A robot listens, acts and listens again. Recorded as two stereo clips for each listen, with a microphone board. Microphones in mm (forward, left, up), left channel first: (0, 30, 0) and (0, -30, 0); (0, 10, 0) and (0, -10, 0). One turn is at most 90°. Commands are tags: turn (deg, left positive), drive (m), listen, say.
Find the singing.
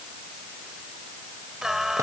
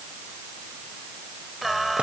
<turn deg="-30"/>
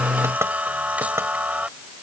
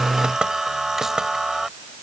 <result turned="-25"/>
<turn deg="-90"/>
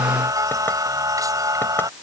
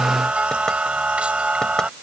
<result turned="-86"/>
<turn deg="-85"/>
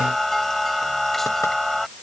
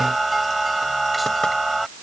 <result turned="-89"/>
<say>Facing the singing.</say>